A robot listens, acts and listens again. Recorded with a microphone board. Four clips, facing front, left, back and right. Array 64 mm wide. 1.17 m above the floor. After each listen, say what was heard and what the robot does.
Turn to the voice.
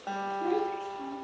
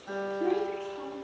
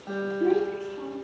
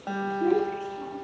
The child speaking: 130° left. Turn 130° left.
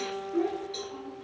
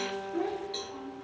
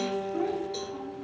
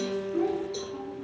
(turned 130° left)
The child speaking is now 25° left. Turn 25° left.
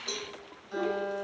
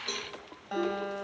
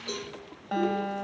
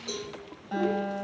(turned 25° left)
The child speaking is now 15° left. Turn 15° left.
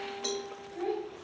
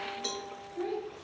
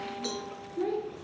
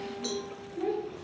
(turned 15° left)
Facing the child speaking.